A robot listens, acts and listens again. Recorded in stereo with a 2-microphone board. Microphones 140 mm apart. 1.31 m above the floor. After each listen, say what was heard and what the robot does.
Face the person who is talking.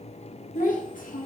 The child speaking: about 75° left or 105° left. Turn 75° left.
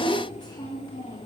So it is at 30° left. Turn 30° left.
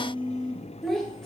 Facing the child speaking.